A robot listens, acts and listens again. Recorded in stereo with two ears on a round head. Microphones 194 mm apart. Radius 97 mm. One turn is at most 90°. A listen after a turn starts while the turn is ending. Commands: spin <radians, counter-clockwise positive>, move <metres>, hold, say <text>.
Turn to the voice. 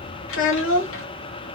spin 1.13
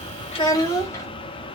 spin 0.26
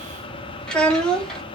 say Facing the child speaking, under 1 m away.